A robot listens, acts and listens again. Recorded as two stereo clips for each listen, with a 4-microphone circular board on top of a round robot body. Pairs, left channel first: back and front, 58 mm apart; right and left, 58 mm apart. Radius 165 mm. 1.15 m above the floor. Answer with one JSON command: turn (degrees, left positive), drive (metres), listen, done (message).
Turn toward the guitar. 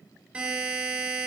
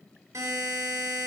{"listen": true}
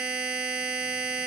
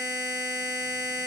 {"listen": true}
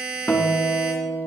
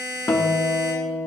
{"turn": -125}
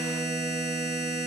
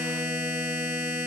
{"listen": true}
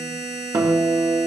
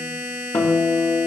{"turn": -40}
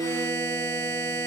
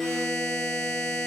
{"done": "Found it: a guitar, straight ahead, 1 to 2 m away."}